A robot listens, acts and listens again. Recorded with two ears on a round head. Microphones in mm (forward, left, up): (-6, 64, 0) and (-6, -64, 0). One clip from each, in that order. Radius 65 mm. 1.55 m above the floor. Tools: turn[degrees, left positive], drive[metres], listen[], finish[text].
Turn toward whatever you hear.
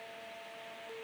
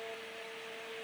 Action: listen[]
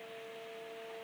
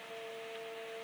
Action: listen[]
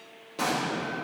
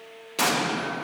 Thought: The explosion: about 55° right or 125° right.
Action: turn[-55]
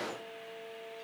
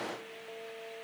Action: listen[]
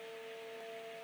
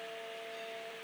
Action: finish[I heard an explosion, but can't make it out now. It was about straight ahead or 70° right.]